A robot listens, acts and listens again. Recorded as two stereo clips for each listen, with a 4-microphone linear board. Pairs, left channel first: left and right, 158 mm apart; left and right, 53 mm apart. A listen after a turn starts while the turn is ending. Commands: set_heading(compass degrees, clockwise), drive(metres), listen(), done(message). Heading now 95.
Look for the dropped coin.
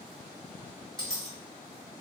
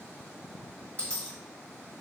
set_heading(65)
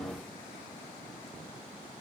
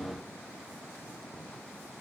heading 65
listen()
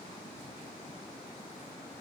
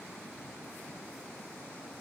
done("I heard a dropped coin, but can't make it out now. It was about straight ahead or 120° left.")